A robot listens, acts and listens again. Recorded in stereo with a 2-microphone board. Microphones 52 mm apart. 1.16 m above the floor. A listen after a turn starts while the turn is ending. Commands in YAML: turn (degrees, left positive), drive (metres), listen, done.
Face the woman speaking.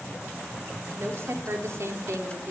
turn: -65
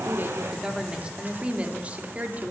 turn: -30
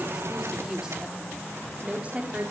turn: -25
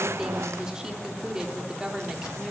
turn: -15
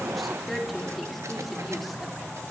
done: "Found it: a woman speaking, straight ahead."